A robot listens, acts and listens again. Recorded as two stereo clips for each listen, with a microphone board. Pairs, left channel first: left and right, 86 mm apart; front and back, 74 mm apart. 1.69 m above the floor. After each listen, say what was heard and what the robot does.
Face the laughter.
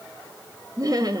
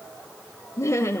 The laughter: 55° right. Turn 55° right.
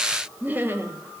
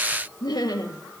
The laughter is now 30° right. Turn 30° right.
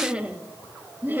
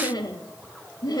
The laughter is now 25° right. Turn 25° right.
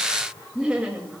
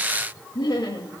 The laughter is now 15° right. Turn 15° right.
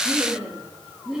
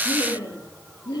The laughter is now 10° right. Turn 10° right.
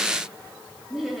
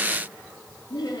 Facing the laughter.